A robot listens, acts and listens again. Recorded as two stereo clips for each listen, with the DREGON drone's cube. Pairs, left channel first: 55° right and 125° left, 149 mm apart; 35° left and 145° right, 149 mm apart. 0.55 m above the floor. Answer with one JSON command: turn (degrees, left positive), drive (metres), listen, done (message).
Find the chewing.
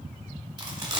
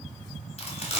{"turn": 70}
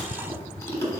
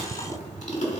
{"turn": 10}
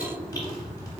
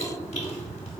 {"done": "Found it: chewing, straight ahead."}